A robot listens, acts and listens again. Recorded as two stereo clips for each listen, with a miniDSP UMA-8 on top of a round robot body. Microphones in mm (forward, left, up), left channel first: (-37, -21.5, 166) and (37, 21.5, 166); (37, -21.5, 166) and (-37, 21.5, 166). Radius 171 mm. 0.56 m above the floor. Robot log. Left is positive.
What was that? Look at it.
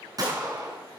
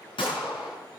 note: The gunshot: 15° right.
cmd yaw -15
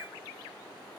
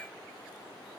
end: I heard a gunshot from this way, but can't make it out now.